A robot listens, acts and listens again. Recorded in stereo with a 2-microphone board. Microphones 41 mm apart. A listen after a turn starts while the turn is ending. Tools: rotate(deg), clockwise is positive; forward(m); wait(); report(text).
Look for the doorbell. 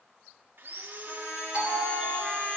rotate(15)
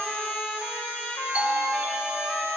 rotate(150)
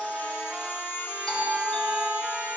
rotate(-10)
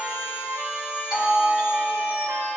report("Facing the doorbell, 2 to 4 m away.")